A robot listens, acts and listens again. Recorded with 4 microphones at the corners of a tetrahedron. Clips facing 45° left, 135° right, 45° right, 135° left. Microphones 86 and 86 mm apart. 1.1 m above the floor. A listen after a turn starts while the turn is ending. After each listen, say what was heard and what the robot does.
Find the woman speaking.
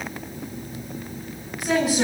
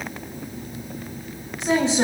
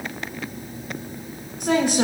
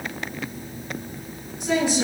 The woman speaking: 70° right. Turn 70° right.
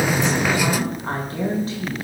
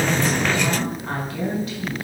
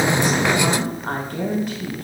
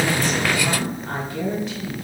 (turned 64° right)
The woman speaking is now 10° right. Turn 10° right.
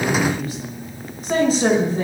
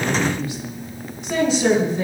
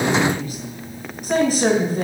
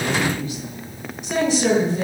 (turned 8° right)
Facing the woman speaking.